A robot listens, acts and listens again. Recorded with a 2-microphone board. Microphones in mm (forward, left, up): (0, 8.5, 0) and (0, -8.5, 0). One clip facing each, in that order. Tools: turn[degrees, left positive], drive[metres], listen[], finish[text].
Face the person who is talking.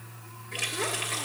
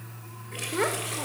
Thought: The child speaking: about 40° right or 140° right.
Action: turn[-40]
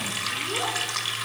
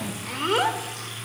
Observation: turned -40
Thought: So it is at 95° right.
Action: turn[-95]
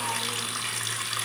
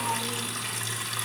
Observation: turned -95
Action: listen[]
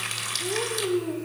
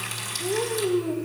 Action: finish[Found it: a child speaking, straight ahead, 1 to 2 m away.]